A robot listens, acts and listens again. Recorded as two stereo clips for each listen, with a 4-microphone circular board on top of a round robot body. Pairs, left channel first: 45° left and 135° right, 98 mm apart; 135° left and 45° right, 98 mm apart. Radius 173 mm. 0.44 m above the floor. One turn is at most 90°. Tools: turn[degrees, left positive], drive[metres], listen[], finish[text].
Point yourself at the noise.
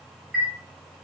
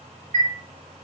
Thought: The chime: 60° right.
Action: turn[-60]
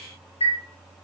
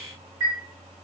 Thought: The chime is now 10° left.
Action: turn[10]
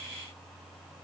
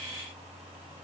Action: listen[]
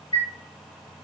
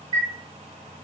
Action: finish[Facing the chime, 1 to 2 m away.]